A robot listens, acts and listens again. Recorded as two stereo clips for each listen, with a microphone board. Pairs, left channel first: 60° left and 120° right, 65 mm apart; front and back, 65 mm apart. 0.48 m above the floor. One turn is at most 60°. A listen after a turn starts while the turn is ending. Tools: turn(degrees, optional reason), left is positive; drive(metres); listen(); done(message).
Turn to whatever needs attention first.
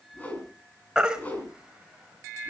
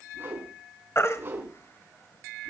turn(degrees=-40, reason="The baby crying: 40° right.")
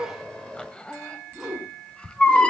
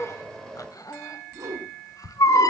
turn(degrees=-15, reason="The baby crying is now 15° right.")
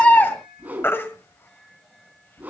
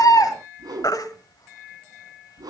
done("Facing the baby crying.")